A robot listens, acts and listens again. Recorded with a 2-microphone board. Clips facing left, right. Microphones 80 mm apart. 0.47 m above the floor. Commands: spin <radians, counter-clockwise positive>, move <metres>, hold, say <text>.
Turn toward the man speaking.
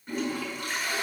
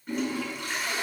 hold
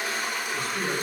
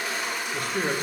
spin -0.96
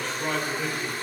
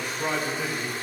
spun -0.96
say Facing the man speaking, 1 to 2 m away.